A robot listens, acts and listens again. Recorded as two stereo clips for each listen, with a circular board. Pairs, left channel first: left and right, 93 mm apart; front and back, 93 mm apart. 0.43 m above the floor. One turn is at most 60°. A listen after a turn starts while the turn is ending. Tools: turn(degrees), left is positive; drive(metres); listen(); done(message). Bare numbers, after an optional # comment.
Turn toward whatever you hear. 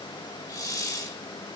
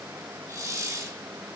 # The hiss: 130° left.
turn(60)
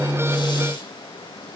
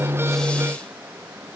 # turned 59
# Nothing new. It was at 75° left.
turn(60)
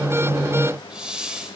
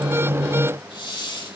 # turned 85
# The hiss is now 10° right.
turn(-10)
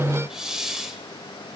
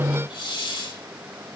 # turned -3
done("Found it: a hiss, straight ahead, 1 to 2 m away.")